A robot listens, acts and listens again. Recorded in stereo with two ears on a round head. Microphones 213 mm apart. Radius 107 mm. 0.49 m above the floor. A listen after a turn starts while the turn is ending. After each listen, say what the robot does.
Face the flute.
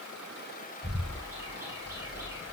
Keep listening.
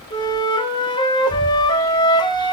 Turn 20° left.
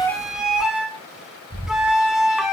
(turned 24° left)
Found it: a flute, straight ahead.